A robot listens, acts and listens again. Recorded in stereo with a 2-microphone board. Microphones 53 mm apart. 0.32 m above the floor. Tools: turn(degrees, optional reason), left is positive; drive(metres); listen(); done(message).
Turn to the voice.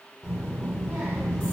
turn(degrees=-35, reason="The child speaking: about 35° right or 145° right.")
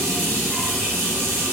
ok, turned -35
listen()
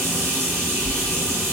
done("Found it: a child speaking, straight ahead.")